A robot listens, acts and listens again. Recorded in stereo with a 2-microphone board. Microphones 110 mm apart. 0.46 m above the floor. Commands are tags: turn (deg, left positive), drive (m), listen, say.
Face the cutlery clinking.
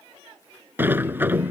<listen/>
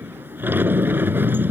<listen/>
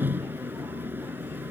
<say>I can't make out cutlery clinking, only a sliding door.</say>